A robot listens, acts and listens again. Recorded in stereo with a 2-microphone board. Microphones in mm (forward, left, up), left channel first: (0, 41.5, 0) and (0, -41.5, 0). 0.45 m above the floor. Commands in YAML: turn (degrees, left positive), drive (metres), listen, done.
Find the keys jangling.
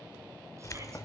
turn: 40
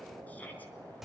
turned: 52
done: "Facing the keys jangling, under 1 m away."